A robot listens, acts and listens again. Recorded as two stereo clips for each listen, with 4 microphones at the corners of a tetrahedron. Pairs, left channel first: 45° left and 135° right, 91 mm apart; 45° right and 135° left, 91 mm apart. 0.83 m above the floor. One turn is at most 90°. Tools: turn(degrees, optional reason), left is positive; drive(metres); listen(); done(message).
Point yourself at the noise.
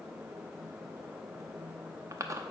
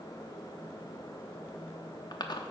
turn(degrees=-80, reason="The chewing: 80° right.")
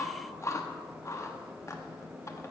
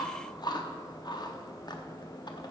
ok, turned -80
turn(degrees=-10, reason="The chewing is now 10° right.")
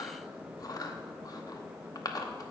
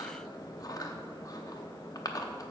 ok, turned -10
done("Facing the chewing.")